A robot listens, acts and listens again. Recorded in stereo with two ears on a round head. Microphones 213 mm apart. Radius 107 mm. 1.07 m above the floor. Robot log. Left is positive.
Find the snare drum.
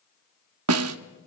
note: The snare drum: about 70° right or 110° right.
cmd yaw -70
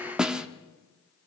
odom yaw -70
end: Found it: a snare drum, straight ahead.